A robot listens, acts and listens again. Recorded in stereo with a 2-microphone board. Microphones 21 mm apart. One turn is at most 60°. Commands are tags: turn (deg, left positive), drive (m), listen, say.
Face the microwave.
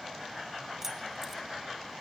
<listen/>
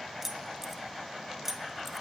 <listen/>
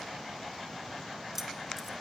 <say>I can't make out a microwave, only keys jangling.</say>